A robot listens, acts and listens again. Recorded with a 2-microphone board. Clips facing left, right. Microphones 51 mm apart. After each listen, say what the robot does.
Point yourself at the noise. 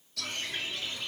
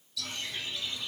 Turn 50° left.
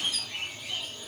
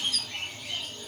Found it: a bird, straight ahead.